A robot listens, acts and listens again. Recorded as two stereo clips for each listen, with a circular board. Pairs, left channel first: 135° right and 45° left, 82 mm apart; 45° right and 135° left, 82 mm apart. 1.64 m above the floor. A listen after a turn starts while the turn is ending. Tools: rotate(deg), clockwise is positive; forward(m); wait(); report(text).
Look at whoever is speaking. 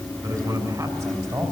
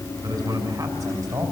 rotate(-80)
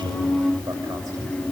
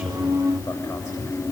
wait()
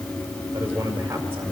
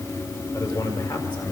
rotate(15)
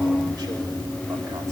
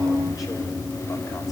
wait()
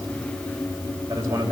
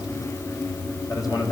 rotate(10)
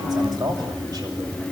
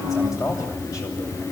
report("Facing the man speaking, over 4 m away.")